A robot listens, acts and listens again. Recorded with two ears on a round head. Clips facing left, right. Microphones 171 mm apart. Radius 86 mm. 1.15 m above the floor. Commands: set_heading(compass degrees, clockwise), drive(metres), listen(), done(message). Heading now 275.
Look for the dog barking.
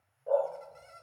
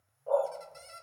set_heading(260)
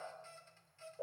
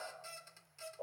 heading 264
set_heading(109)
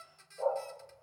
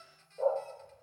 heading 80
set_heading(115)
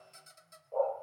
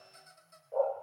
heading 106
set_heading(116)
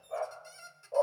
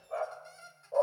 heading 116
done("Facing the dog barking.")